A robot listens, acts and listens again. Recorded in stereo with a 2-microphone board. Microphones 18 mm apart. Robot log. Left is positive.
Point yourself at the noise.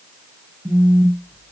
note: The phone buzzing: about 70° right or 110° right.
cmd yaw -70
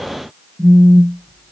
note: So it is at 25° right.
cmd yaw -25
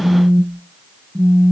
end: Found it: a phone buzzing, straight ahead, under 1 m away.